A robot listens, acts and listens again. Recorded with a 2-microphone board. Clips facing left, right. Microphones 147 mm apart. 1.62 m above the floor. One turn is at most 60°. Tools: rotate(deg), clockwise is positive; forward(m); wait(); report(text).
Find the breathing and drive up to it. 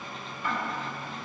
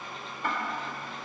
wait()
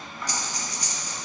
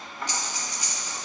rotate(-40)
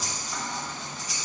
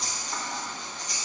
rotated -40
forward(1.0)
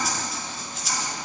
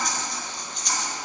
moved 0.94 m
forward(1.0)
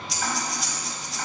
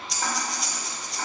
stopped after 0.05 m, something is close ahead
report("Arrived at the breathing, straight ahead.")